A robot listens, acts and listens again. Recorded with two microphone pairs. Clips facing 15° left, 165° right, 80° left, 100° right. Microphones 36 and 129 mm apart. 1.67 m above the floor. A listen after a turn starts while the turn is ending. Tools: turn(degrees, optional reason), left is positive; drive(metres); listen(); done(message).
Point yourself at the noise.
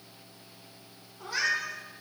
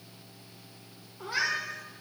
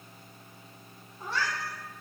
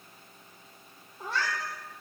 turn(degrees=-100, reason="The cat meowing: 100° right.")
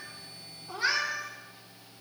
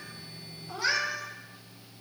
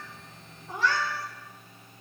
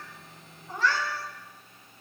turn(degrees=30, reason="The cat meowing is now 30° left.")
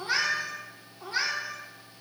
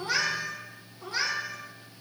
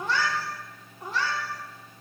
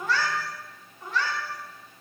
turn(degrees=65, reason="The cat meowing is now 65° left.")
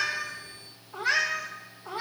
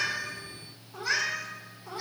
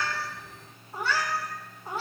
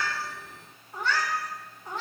done("Facing the cat meowing, 1 to 2 m away.")